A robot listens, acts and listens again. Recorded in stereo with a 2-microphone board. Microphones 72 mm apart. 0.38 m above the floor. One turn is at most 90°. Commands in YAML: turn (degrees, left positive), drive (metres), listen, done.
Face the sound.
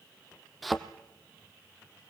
turn: 30
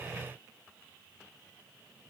listen: true
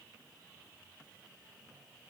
done: "I heard a thud, but can't make it out now. It was about 30° right or 150° left."